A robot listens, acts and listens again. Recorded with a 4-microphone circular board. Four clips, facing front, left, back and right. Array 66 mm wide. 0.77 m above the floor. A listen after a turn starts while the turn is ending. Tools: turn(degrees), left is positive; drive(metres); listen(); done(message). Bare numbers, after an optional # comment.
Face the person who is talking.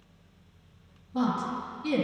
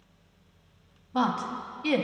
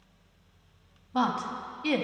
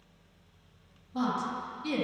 # The woman speaking: 135° left.
turn(135)
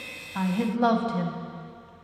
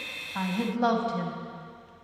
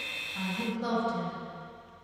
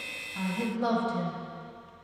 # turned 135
# The woman speaking is now 25° left.
turn(25)
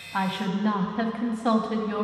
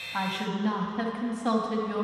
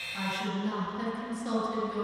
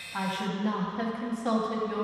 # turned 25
# The woman speaking is now 10° left.
turn(10)
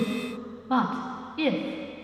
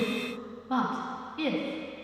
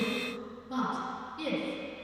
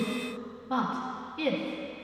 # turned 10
done("Facing the woman speaking.")